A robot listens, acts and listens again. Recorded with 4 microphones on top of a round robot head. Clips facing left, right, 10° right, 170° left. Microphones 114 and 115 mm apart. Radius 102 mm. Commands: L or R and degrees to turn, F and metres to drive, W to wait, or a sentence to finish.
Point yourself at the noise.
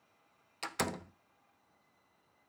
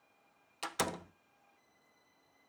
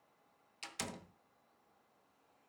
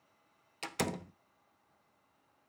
R175
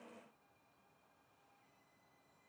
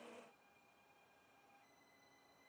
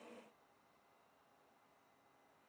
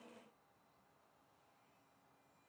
I heard a door slam from this way, but can't make it out now.